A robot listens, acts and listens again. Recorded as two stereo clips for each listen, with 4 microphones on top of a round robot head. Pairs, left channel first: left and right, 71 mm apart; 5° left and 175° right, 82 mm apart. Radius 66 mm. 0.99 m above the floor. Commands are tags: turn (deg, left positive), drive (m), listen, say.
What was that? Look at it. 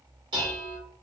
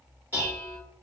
<turn deg="-100"/>
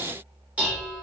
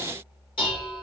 <turn deg="-20"/>
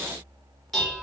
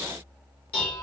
<say>Found it: dishes clattering, straight ahead, 1 to 2 m away.</say>